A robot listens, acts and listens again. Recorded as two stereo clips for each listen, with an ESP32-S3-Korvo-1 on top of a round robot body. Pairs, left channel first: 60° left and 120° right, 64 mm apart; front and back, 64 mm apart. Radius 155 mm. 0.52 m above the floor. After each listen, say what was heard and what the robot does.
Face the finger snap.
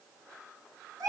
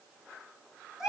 Keep listening.
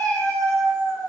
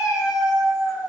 Keep listening.
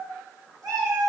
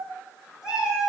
I can't make out a finger snap, only a cat meowing.